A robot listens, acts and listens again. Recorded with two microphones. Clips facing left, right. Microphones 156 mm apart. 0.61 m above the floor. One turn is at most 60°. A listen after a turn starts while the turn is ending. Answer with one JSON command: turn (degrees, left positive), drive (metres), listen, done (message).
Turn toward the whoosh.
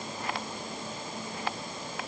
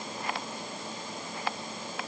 {"listen": true}
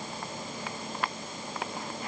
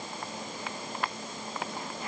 {"listen": true}
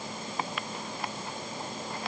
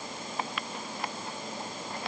{"done": "I can't make out a whoosh."}